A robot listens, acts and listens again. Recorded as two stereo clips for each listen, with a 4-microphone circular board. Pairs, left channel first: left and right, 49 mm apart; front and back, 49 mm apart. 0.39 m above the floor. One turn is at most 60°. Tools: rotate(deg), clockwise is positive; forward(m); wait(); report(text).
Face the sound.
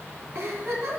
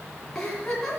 rotate(60)
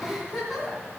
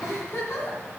report("Facing the giggle.")